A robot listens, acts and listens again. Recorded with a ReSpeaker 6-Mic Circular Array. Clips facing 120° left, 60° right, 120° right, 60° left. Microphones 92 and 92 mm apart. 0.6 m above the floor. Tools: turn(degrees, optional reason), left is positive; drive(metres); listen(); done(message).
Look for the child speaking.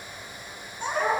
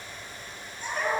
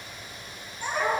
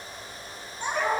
turn(degrees=130, reason="The child speaking: 130° left.")
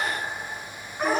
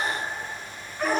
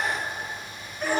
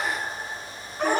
turn(degrees=30, reason="The child speaking is now 30° left.")
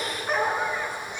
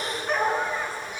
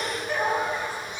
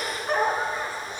turn(degrees=20, reason="The child speaking is now 20° left.")
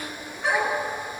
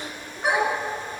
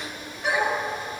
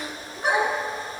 done("Facing the child speaking, over 4 m away.")